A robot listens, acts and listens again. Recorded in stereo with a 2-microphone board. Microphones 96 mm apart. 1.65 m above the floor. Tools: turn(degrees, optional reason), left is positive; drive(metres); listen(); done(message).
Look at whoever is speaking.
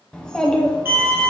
turn(degrees=30)
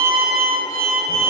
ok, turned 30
listen()
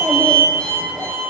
turn(degrees=-20, reason="So it is at 20° right.")
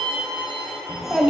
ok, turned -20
done("Facing the child speaking, under 1 m away.")